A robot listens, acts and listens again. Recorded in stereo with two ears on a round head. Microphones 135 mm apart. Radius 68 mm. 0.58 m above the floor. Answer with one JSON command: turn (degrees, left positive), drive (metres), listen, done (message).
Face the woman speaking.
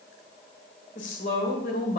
{"turn": 60}
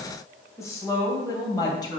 {"turn": 25}
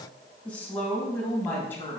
{"turn": 15}
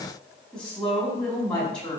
{"done": "Facing the woman speaking."}